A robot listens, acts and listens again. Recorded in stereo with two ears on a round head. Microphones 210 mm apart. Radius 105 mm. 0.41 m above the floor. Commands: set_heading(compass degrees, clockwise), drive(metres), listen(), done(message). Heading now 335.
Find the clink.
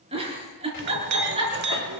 set_heading(20)
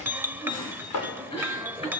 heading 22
set_heading(32)
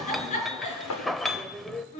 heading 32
done("Found it: a clink, straight ahead.")